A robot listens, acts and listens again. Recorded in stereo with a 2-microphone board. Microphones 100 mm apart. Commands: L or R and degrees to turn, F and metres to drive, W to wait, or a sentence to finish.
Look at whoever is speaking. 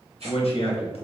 L70
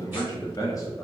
L35
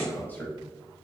L15
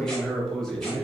Found it: a man speaking, straight ahead, under 1 m away.